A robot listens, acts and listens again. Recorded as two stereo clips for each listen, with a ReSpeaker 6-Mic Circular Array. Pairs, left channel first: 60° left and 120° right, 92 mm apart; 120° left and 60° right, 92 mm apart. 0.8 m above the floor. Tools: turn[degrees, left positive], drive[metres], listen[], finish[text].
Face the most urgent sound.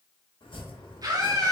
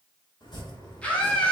Thought: The scream: 165° right.
Action: turn[-165]
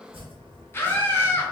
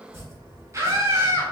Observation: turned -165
Action: finish[Facing the scream.]